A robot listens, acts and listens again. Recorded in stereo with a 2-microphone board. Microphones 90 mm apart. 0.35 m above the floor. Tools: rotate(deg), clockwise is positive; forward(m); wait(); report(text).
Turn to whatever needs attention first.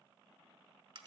wait()
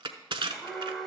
rotate(-30)
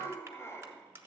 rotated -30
rotate(-145)
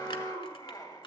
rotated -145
rotate(-50)
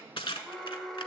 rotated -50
report("Facing the alarm, 1 to 2 m away.")